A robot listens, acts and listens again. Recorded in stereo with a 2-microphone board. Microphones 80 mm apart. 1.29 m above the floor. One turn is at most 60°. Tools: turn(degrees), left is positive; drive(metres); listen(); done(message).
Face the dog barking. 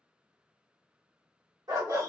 turn(degrees=-50)
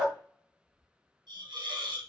done("Facing the dog barking, 1 to 2 m away.")